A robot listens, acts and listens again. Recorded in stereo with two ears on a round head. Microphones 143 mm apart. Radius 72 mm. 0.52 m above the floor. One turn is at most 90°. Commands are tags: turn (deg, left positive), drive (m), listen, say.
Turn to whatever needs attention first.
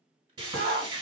<turn deg="-60"/>
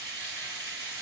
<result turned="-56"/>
<listen/>
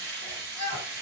<turn deg="-35"/>
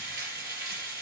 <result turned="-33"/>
<listen/>
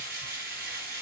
<listen/>
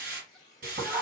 <say>Facing the shout, 1 to 2 m away.</say>